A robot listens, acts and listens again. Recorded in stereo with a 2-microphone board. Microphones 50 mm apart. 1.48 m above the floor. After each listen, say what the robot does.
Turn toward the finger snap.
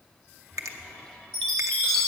Turn 90° right.
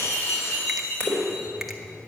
Keep listening.
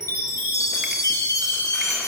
Keep listening.
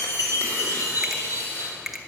Facing the finger snap, under 1 m away.